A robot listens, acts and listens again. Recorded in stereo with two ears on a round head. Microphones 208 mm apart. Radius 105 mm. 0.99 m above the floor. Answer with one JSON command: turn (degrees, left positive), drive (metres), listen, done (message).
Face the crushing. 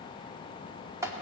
{"listen": true}
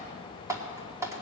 {"listen": true}
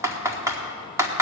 {"done": "I can't make out crushing, only typing on a keyboard."}